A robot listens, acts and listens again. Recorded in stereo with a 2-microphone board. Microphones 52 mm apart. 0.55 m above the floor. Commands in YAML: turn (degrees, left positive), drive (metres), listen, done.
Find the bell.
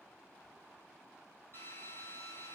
listen: true
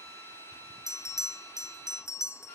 turn: 70
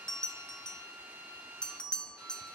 turn: 15
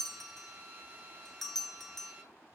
done: "Facing the bell."